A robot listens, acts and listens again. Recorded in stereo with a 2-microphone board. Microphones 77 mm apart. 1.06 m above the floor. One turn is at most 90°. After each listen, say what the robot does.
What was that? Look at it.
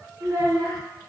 Turn 60° right.
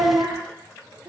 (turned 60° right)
Turn 80° right.
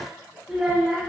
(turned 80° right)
Turn 10° right.
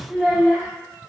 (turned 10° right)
Turn 10° right.
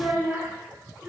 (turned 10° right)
Turn 15° right.
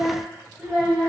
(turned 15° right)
Found it: a child speaking, straight ahead, 2 to 4 m away.